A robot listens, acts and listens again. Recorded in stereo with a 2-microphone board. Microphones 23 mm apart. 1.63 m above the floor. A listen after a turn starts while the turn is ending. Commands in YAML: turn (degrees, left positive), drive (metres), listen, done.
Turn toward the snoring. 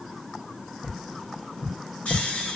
turn: 75
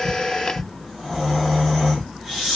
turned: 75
done: "Found it: snoring, straight ahead, 2 to 4 m away."